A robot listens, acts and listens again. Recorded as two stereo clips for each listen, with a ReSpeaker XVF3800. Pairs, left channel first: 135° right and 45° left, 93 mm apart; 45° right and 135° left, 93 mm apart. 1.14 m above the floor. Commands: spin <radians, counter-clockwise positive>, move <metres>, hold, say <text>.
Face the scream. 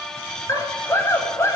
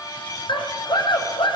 spin -1.31
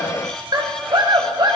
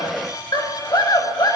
say Facing the scream, over 4 m away.